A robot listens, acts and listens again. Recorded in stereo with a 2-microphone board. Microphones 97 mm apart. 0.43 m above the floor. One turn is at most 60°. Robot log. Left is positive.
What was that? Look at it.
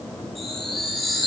cmd yaw +30
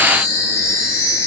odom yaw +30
note: So it is at 145° left.
cmd yaw +60
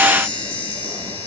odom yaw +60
note: The chime is now 95° left.
cmd yaw +60
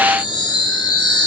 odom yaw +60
note: The chime is now 50° left.
cmd yaw +50
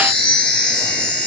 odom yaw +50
note: The chime is now 10° left.
cmd yaw +10
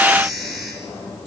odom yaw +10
end: Facing the chime.